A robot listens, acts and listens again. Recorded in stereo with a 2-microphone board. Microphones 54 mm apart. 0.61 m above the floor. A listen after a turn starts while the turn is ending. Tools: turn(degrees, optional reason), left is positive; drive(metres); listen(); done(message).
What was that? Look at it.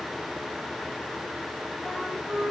turn(degrees=40, reason="The flute: about 40° left or 140° left.")
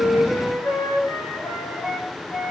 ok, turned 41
turn(degrees=100, reason="So it is at 100° left.")
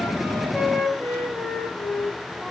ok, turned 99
done("Facing the flute, over 4 m away.")